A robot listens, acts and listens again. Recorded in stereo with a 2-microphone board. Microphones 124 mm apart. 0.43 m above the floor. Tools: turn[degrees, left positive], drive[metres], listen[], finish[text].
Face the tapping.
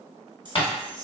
Thought: The tapping: about 45° left or 135° left.
Action: turn[45]
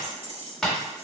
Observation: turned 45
Action: finish[Found it: tapping, straight ahead.]